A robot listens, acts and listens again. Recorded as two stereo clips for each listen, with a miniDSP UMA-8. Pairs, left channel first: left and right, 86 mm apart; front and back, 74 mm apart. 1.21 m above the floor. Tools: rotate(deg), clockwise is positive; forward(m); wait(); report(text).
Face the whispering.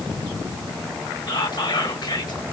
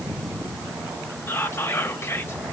rotate(-55)
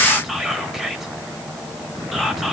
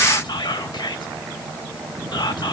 report("Found it: whispering, straight ahead.")